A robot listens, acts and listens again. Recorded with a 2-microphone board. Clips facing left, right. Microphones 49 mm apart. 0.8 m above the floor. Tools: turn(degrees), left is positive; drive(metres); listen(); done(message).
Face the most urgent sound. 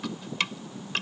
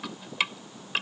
listen()
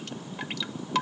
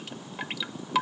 listen()
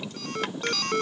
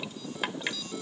turn(degrees=65)
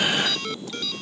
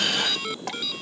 done("Found it: an alarm, straight ahead.")